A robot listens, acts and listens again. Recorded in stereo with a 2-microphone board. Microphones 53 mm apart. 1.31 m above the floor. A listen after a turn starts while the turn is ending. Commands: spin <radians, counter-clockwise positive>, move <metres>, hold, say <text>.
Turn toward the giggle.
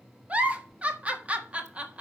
spin -0.44
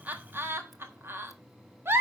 spin -2.27
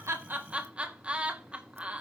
spin -0.35
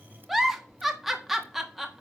say Found it: a giggle, straight ahead, 1 to 2 m away.